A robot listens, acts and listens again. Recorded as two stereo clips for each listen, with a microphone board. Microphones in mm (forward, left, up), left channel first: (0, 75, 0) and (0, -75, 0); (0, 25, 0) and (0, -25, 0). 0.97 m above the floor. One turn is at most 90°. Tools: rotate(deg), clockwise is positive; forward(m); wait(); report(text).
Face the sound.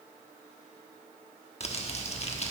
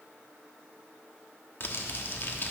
rotate(-45)
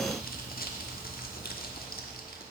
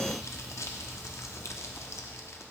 rotate(-85)
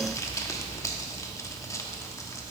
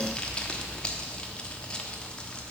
rotate(-20)
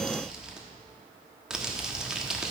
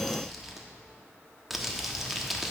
report("Facing the crumpling.")